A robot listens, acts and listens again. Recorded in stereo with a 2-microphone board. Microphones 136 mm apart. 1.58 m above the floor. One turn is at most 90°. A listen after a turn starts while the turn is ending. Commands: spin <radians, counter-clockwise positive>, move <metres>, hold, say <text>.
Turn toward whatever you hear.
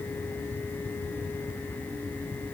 hold
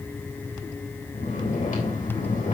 spin 1.31
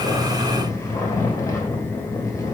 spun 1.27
spin 0.44
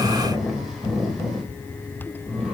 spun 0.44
say Facing the snoring, 2 to 4 m away.